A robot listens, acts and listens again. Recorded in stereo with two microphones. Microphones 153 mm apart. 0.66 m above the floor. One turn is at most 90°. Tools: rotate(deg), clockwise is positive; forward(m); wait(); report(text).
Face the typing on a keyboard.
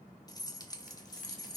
wait()
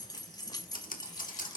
rotate(-65)
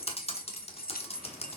rotate(-45)
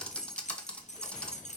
rotate(-10)
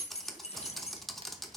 report("Facing the typing on a keyboard.")